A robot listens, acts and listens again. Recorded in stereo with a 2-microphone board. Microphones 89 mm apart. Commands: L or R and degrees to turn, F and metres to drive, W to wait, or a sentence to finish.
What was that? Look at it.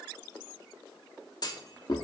L45
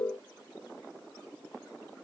W
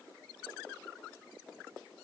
I heard a clunk, but can't make it out now. It was about straight ahead or 90° left.